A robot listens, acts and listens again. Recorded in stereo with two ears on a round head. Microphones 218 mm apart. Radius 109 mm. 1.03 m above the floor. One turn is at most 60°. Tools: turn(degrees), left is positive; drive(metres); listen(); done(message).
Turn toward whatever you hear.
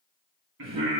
turn(degrees=-55)
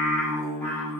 turn(degrees=10)
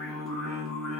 done("Facing the singing, 2 to 4 m away.")